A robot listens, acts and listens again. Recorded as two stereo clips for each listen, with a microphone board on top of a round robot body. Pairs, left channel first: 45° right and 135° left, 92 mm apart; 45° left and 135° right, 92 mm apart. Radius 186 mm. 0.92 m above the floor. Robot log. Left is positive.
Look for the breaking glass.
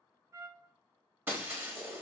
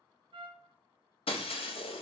note: The breaking glass: 65° left.
cmd yaw +65
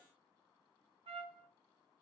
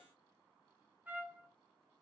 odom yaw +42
note: Nothing new. It was at 25° left.
cmd yaw +25
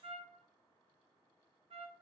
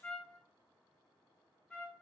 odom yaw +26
end: Facing where the breaking glass came from. I can't hear it now.